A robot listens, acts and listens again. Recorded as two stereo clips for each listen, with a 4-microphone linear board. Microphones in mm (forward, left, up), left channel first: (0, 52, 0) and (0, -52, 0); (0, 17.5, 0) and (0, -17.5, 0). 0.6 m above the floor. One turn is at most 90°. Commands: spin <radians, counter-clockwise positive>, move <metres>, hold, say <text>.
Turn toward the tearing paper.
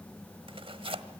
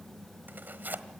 spin -1.05
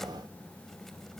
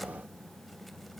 hold
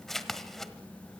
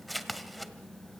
say Found it: tearing paper, straight ahead.